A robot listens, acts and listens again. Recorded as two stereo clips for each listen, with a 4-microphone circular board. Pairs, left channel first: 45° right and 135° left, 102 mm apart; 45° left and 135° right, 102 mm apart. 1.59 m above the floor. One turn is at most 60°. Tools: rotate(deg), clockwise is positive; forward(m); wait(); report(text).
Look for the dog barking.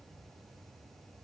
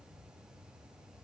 wait()
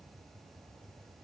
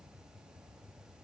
wait()
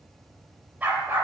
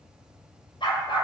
rotate(-60)
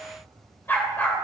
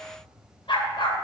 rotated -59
rotate(-25)
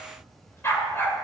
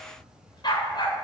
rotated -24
rotate(-20)
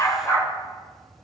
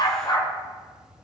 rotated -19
rotate(-10)
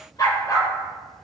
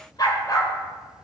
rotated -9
report("Facing the dog barking.")